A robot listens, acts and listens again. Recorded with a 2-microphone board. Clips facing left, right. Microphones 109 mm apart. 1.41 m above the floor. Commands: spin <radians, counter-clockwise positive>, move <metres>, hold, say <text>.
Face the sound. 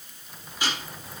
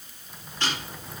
spin 0.52
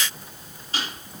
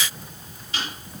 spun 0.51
spin 2.44
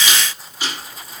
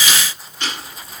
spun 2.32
say Facing the ticking.